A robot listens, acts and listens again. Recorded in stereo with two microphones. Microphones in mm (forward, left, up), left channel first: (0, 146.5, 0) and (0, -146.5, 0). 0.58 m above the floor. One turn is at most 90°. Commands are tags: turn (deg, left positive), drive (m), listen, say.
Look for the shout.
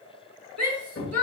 <turn deg="-55"/>
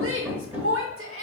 <turn deg="-55"/>
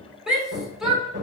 <say>Facing the shout, 1 to 2 m away.</say>